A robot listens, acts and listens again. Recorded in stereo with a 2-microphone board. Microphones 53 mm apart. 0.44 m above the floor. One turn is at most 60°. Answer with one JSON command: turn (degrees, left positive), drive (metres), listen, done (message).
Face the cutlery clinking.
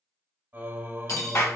{"turn": 60}
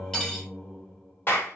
{"listen": true}
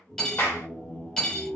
{"turn": 10}
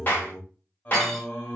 {"listen": true}
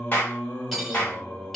{"done": "Found it: cutlery clinking, straight ahead, 1 to 2 m away."}